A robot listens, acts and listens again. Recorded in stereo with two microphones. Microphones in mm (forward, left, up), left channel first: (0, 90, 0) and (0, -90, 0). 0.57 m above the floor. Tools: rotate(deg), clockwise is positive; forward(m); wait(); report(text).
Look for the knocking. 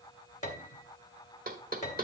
rotate(50)
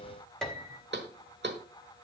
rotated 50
rotate(80)
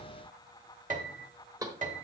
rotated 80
rotate(20)
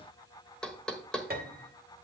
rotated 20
report("Facing the knocking.")